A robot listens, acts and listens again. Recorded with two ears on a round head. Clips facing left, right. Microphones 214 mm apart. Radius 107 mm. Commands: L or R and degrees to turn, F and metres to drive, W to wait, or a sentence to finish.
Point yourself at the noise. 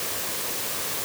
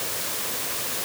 W
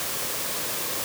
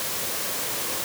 W
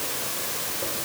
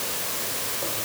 I can't make out anything.